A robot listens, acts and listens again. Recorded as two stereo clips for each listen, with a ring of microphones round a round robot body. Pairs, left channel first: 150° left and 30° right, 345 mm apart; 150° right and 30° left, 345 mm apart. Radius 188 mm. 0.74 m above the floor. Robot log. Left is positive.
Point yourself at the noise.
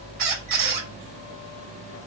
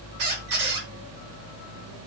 note: The squeak: 10° left.
cmd yaw +10
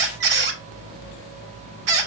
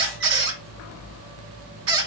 end: Found it: a squeak, straight ahead, 1 to 2 m away.